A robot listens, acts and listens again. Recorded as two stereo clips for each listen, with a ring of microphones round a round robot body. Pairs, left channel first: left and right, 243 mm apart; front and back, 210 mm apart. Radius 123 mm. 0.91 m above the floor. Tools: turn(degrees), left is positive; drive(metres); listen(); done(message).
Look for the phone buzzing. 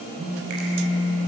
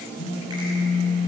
turn(degrees=-20)
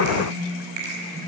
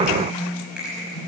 turn(degrees=-10)
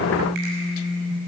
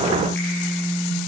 done("Found it: a phone buzzing, straight ahead, over 4 m away.")